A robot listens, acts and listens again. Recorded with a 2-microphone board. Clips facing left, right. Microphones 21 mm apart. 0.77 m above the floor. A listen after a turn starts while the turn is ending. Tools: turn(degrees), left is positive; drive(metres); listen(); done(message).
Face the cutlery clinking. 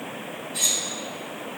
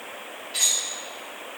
turn(degrees=-70)
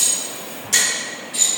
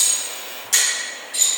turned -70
done("Facing the cutlery clinking, 1 to 2 m away.")